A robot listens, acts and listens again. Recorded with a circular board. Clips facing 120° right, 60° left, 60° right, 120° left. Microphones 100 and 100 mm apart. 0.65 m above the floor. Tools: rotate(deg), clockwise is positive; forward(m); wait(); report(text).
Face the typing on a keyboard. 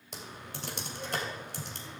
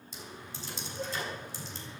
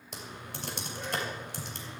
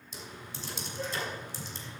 rotate(90)
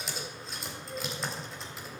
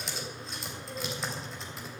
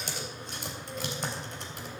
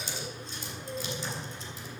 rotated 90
rotate(30)
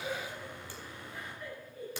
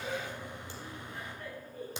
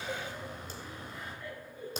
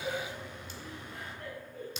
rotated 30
rotate(10)
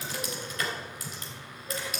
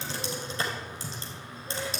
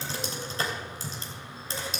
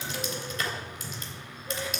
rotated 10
report("Facing the typing on a keyboard.")